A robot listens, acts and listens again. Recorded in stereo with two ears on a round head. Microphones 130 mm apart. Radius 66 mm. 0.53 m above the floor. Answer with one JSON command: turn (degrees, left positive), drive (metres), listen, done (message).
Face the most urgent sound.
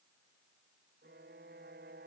{"listen": true}
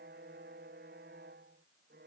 {"listen": true}
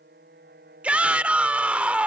{"turn": -30}
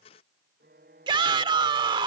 {"turn": -140}
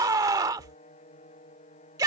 {"turn": -30}
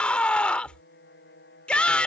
{"turn": 10}
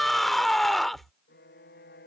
{"done": "Found it: a shout, straight ahead."}